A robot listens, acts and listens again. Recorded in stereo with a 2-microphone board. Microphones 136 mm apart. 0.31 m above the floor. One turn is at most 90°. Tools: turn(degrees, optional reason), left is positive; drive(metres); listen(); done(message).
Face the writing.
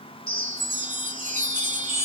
listen()
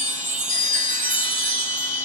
listen()
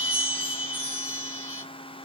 done("I can't make out writing to turn to.")